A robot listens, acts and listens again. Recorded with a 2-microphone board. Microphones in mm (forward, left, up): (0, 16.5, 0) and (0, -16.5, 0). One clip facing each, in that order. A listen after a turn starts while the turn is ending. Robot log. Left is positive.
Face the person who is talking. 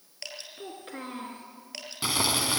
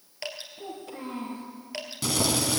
note: The child speaking: about 50° left or 130° left.
cmd yaw +50
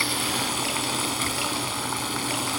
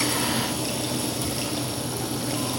cmd idle
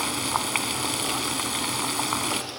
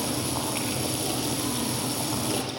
cmd idle
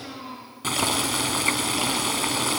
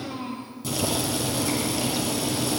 end: Found it: a child speaking, straight ahead, over 4 m away.